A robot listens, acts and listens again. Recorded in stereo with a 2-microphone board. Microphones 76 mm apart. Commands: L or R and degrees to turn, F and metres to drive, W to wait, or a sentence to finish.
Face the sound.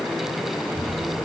R30
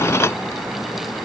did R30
W
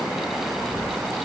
R145
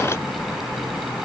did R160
L20
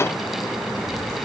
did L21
Facing the child speaking, over 4 m away.